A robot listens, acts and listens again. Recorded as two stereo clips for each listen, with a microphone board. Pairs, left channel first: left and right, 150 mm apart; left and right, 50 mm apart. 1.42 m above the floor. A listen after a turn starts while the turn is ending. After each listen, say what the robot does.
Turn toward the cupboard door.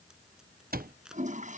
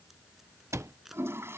Turn 90° right.
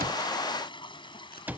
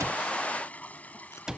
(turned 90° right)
Turn 10° right.
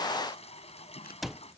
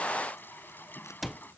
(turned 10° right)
Found it: a cupboard door, straight ahead.